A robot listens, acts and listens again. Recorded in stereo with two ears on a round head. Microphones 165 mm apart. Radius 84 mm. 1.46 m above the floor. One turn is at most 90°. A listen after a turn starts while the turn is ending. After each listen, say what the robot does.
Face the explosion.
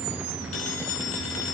Keep listening.
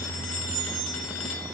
Keep listening.
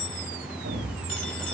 Turn 50° right.
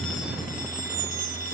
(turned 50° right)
Keep listening.
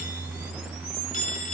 I heard an explosion, but can't make it out now. It was about straight ahead or 80° right.